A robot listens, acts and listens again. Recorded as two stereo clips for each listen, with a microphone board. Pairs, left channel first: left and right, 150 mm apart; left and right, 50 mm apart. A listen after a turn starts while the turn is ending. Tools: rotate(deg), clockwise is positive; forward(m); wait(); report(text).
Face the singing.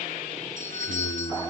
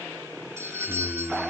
rotate(-65)
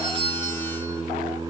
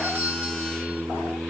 rotate(20)
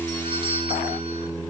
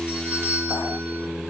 rotate(20)
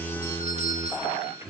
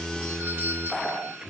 rotate(20)
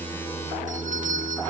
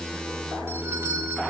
report("Found it: singing, straight ahead.")